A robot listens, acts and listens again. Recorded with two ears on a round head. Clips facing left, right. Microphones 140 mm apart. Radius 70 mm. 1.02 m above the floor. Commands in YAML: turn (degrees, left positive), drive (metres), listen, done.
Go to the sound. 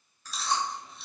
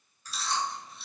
turn: 70
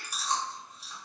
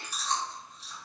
turn: 10
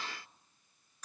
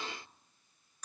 drive: 1.0
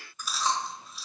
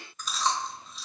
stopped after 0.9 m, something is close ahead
done: "I am next to the chewing."